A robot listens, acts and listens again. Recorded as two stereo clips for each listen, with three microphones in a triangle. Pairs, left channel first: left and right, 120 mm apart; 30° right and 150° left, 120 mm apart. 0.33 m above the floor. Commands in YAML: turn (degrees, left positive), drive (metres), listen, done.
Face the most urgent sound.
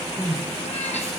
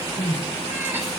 turn: -30
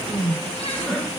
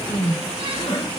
done: "Facing the crying, 2 to 4 m away."